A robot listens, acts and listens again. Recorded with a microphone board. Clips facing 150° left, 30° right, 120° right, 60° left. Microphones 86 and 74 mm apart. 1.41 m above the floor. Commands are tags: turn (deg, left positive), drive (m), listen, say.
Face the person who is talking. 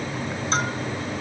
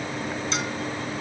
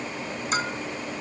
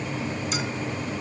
<listen/>
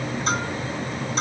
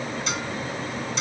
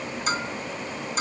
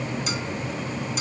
<listen/>
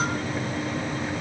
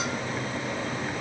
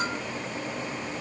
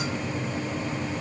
<say>I can't make out anyone speaking to turn to.</say>